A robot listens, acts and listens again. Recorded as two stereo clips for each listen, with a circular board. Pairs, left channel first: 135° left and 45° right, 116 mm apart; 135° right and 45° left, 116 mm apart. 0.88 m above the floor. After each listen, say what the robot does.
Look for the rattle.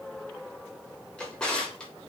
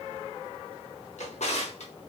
Keep listening.
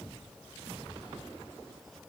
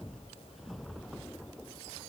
Keep listening.
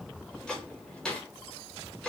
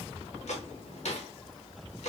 I can't make out a rattle, only a drawer.